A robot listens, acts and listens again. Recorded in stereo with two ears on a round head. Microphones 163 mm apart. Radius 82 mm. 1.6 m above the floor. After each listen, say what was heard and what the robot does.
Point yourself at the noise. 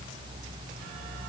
Keep listening.
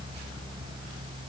Keep listening.
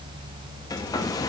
The hair dryer: about 20° left or 160° left. Turn 20° left.
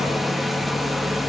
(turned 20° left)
Facing the hair dryer, 1 to 2 m away.